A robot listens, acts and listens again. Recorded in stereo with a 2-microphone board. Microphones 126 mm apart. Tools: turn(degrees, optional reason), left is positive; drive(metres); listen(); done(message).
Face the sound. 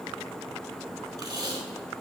turn(degrees=-35, reason="The tape being pulled: about 35° right or 145° right.")
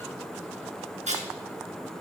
turn(degrees=-110, reason="So it is at 110° right.")
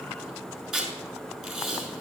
done("Facing the tape being pulled, over 4 m away.")